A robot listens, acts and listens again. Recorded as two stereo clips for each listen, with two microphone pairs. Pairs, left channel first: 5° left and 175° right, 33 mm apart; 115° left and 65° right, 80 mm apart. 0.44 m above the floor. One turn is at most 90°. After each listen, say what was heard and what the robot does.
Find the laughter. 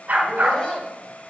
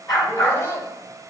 The laughter: 65° left. Turn 65° left.
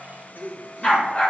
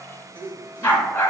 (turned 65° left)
Found it: laughter, straight ahead, 1 to 2 m away.